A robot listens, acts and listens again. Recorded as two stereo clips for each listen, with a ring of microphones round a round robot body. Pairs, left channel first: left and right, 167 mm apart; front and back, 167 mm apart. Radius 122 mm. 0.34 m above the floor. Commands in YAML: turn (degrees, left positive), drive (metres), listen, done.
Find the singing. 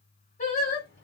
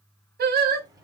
turn: 145
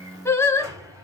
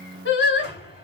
turn: 15
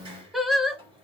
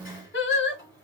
done: "Facing the singing."